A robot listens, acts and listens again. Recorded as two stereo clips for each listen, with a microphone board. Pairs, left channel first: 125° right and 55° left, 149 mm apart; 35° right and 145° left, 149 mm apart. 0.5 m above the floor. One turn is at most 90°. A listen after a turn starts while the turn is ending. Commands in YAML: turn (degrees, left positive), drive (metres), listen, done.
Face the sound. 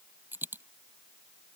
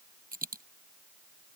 turn: 90
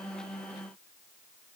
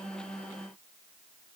turn: 40
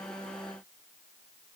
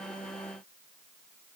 done: "Facing where the dropped coin came from. I can't hear it now."